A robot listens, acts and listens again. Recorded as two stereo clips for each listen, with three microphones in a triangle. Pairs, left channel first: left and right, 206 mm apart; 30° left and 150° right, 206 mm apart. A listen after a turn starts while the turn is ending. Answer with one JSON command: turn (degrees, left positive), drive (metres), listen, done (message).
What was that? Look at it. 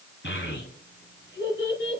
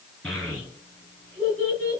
{"turn": 125}
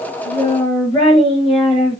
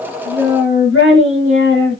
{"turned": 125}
{"turn": 30}
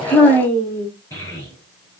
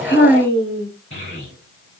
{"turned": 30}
{"turn": 15}
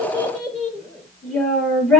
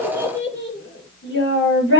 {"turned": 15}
{"done": "Found it: a child speaking, straight ahead, over 4 m away."}